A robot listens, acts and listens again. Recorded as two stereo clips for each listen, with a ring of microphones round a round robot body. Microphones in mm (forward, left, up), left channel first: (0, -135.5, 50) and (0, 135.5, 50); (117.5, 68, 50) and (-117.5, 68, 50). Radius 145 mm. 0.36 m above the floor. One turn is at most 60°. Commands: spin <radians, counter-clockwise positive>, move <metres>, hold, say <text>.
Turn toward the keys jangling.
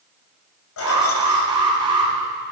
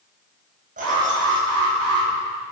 spin -1.05
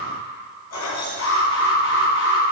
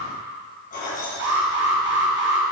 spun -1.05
spin -1.05
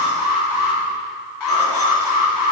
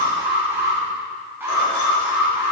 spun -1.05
hold
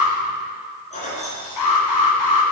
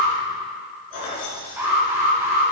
spin -0.44
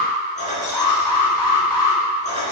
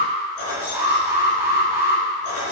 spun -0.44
spin -0.44
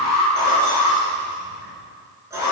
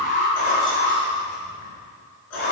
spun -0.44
spin 0.17
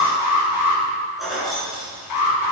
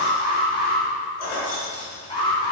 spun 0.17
say Facing the keys jangling.